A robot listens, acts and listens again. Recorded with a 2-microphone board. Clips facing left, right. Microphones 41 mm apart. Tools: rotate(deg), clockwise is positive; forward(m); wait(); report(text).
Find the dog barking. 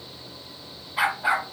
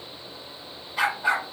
rotate(-30)
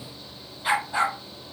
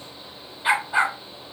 rotate(20)
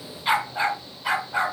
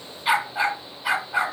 report("Facing the dog barking, 1 to 2 m away.")